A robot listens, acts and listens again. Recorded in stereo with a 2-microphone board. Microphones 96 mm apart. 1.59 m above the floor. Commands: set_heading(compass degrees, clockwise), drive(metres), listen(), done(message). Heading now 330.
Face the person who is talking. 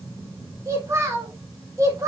set_heading(0)
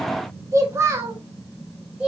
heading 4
set_heading(14)
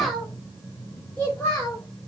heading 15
set_heading(355)
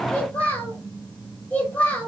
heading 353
set_heading(338)
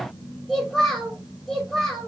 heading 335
done("Found it: a child speaking, straight ahead, 1 to 2 m away.")